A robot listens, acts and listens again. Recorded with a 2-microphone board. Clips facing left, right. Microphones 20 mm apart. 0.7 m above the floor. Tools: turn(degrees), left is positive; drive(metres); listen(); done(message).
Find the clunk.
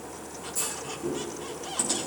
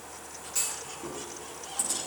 turn(degrees=-45)
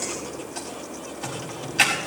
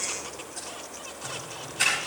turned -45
listen()
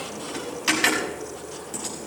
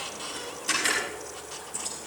done("I heard a clunk, but can't make it out now. It was about straight ahead or 90° right.")